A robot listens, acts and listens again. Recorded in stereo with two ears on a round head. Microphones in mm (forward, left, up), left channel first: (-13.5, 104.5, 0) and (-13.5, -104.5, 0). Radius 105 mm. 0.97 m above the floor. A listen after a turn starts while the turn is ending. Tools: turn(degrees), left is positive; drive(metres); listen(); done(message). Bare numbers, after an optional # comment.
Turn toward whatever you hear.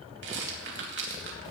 # The rattle: about 60° right or 120° right.
turn(-60)
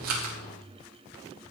listen()
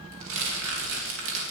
# So it is at 60° right.
turn(-60)
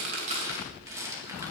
# The rattle is now 15° right.
turn(-15)
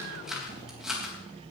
done("Facing the rattle.")